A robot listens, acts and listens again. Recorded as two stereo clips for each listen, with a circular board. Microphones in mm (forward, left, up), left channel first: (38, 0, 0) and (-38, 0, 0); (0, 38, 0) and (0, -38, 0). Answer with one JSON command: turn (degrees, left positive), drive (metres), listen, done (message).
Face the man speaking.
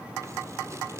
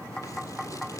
{"listen": true}
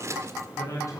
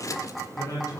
{"turn": 45}
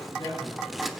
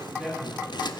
{"done": "Found it: a man speaking, straight ahead."}